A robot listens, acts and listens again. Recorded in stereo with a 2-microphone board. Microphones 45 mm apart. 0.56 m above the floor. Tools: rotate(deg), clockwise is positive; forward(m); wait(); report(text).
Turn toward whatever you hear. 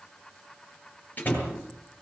rotate(-35)
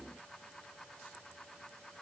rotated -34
wait()
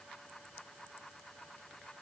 report("I heard a door slam, but can't make it out now. It was about straight ahead or 110° left.")